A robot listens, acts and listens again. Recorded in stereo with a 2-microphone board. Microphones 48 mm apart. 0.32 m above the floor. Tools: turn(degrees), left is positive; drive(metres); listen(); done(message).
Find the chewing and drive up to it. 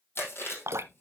turn(degrees=55)
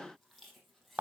listen()
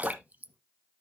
listen()
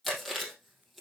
drive(metres=1.0)
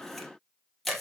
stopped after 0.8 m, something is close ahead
done("Something is in my way. I am facing the chewing but have not reached it.")